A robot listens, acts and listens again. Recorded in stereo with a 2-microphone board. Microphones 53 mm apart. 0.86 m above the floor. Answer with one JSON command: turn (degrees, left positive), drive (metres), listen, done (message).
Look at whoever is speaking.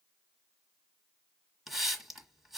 {"listen": true}
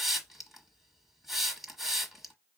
{"listen": true}
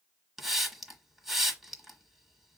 {"done": "I can't make out anyone speaking, only a hiss."}